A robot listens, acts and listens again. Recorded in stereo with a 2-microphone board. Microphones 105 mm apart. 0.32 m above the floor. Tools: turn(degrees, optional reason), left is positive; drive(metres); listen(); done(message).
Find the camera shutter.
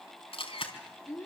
turn(degrees=60, reason="The camera shutter: about 60° left or 120° left.")
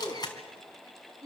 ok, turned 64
turn(degrees=45, reason="So it is at 45° left.")
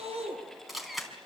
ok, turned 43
done("Facing the camera shutter.")